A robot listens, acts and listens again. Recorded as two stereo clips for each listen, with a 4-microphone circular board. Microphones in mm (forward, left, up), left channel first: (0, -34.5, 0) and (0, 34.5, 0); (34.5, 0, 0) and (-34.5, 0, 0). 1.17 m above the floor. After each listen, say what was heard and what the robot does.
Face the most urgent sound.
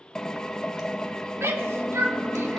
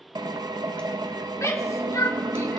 The shout: 40° left. Turn 40° left.
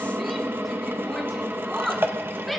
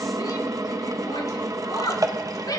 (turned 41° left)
Found it: a shout, straight ahead.